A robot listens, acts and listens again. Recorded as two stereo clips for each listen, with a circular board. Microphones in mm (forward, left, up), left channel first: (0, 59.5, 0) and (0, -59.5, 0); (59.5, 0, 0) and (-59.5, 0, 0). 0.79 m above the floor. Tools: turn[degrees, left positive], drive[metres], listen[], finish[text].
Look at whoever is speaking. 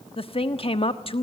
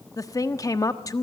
Thought: The woman speaking: 60° left.
Action: turn[60]
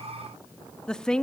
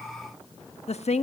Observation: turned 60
Action: finish[Facing the woman speaking.]